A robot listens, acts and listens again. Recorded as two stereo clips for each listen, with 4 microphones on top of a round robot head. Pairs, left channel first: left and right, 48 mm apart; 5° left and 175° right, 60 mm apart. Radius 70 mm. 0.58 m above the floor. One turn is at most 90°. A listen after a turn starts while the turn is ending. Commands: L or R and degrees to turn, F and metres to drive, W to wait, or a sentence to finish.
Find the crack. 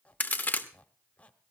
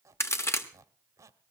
L40
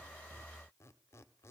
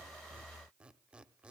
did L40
I heard a crack from this way, but can't make it out now.